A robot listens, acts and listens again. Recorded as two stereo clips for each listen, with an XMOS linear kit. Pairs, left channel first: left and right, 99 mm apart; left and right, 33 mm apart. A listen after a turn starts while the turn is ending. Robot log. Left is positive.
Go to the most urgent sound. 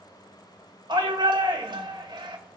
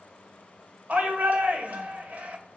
note: The shout: about 50° right or 130° right.
cmd yaw -50
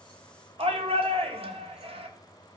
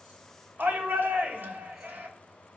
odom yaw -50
note: So it is at 75° right.
cmd yaw -75
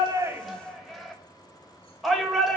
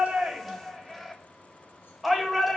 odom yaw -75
cmd fwd 1.0
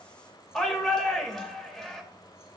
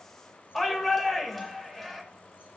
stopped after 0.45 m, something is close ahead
end: Blocked. The shout is further on, straight ahead.